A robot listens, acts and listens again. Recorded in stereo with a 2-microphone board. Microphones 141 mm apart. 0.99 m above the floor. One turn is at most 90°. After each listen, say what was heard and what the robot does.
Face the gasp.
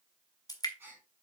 The gasp: about 15° right or 165° right. Turn 15° right.
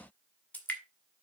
Keep listening.
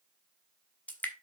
I heard a gasp, but can't make it out now. It was about straight ahead or 150° right.